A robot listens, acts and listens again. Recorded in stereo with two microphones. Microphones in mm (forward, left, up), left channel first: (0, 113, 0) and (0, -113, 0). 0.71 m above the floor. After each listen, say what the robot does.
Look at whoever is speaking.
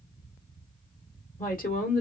Turn 40° left.
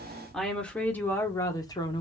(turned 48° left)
Turn 20° left.
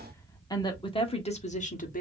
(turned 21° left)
Turn 35° left.
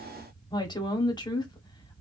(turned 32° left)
Turn 20° left.
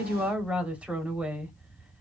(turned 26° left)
Found it: a woman speaking, straight ahead.